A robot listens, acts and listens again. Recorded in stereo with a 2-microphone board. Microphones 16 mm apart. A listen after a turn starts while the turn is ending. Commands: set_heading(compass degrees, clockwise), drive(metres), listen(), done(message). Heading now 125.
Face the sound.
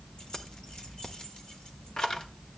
set_heading(75)
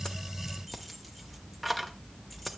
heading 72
done("Found it: keys jangling, straight ahead.")